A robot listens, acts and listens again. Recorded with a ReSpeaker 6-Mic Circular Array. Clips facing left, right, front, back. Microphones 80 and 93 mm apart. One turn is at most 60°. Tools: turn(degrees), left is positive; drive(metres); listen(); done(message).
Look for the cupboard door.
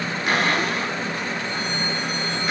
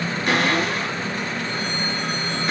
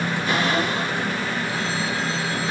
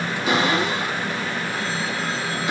turn(degrees=60)
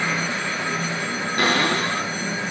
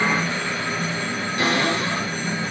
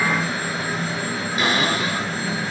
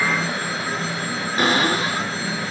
turn(degrees=60)
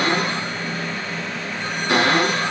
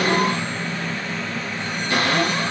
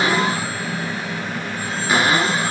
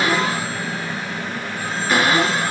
turn(degrees=60)
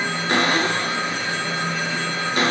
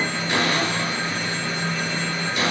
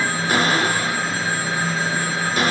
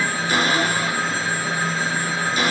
turn(degrees=45)
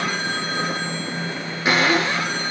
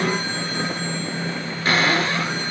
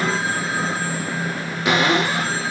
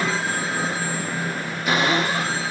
turn(degrees=15)
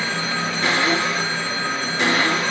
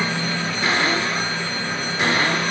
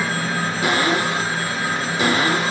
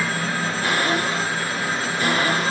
done("Facing the cupboard door, over 4 m away.")